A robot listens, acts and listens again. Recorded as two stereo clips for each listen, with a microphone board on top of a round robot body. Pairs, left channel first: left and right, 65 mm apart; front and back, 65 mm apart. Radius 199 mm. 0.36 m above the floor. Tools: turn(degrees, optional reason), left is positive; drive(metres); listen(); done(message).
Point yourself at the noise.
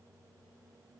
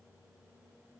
listen()
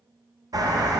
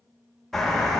turn(degrees=-85, reason="The bird: 85° right.")
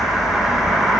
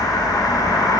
done("Found it: a bird, straight ahead.")